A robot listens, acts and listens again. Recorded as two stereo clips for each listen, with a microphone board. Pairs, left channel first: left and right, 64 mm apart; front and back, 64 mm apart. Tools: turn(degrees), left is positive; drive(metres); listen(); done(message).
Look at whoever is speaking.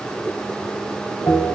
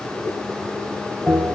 listen()
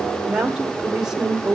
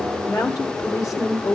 turn(degrees=-15)
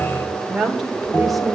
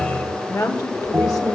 done("Found it: a woman speaking, straight ahead, 2 to 4 m away.")